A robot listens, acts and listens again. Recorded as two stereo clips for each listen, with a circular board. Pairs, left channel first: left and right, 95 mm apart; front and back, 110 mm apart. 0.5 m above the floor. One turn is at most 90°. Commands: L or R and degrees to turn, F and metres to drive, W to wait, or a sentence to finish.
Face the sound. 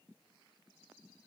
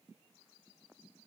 W
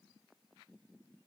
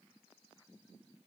W
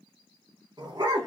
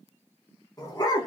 R45
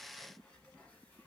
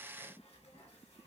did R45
W
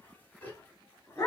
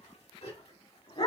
L30
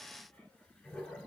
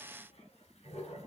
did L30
L10
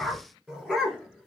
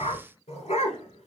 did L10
Found it: a dog barking, straight ahead, 1 to 2 m away.